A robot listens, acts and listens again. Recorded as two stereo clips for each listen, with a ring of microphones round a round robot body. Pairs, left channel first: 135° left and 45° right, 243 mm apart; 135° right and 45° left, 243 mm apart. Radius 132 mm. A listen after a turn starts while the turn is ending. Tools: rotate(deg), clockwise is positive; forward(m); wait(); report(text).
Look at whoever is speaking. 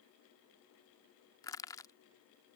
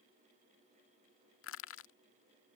wait()
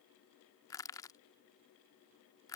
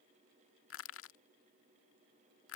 wait()
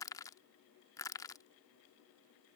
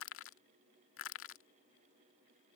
report("I can't make out anyone speaking to turn to.")